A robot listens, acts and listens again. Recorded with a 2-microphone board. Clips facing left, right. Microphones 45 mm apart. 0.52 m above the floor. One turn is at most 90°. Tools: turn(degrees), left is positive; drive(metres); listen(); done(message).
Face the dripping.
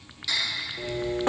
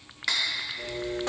turn(degrees=30)
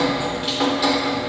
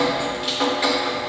done("Found it: dripping, straight ahead.")